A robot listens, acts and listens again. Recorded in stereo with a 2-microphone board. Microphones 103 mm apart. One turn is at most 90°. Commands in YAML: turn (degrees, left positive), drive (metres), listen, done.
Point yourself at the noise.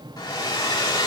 turn: 45
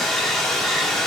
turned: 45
done: "Facing the hair dryer."